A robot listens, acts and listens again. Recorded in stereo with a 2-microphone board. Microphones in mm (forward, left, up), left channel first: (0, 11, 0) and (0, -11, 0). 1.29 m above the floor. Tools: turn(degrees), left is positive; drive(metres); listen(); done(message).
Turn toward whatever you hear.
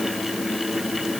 listen()
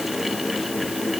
listen()
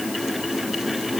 done("I can't make out anything to turn to.")